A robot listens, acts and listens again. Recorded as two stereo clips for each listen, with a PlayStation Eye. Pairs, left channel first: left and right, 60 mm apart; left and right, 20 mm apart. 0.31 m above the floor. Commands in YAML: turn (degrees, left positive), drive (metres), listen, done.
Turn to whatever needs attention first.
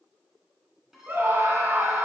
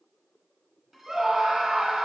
turn: -35
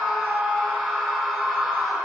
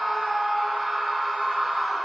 done: "Found it: a scream, straight ahead, 2 to 4 m away."